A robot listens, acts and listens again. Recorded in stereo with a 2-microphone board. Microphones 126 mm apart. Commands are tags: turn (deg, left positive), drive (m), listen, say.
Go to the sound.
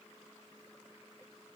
<listen/>
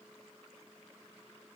<listen/>
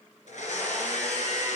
<turn deg="70"/>
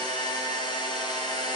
<turn deg="35"/>
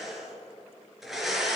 <drive m="1.0"/>
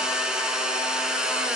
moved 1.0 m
<drive m="1.0"/>
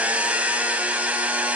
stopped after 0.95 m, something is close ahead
<turn deg="-15"/>
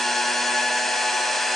<say>Arrived at the blender, straight ahead.</say>